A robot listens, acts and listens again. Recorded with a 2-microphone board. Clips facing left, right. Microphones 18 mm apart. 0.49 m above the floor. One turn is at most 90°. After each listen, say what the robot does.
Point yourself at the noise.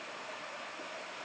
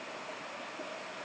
Keep listening.
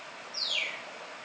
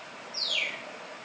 Turn 30° right.
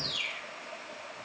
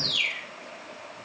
Turn 90° right.
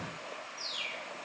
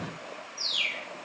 Turn 45° right.
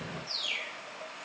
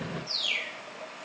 Turn 20° right.
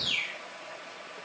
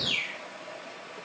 Facing the bird.